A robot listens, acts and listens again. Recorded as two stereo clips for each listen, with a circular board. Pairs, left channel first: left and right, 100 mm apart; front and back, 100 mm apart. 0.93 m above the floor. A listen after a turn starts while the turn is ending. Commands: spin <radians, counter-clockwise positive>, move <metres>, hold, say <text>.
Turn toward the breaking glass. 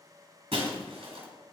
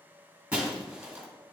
spin -1.83
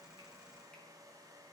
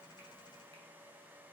say Facing where the breaking glass came from. I can't hear it now.